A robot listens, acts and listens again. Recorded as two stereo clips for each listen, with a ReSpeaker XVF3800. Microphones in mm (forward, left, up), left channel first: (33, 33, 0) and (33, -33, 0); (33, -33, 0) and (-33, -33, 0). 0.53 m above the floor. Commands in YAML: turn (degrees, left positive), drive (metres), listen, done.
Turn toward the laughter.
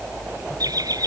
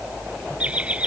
turn: -110
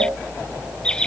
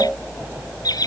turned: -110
turn: 15
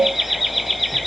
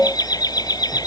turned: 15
done: "Facing the laughter."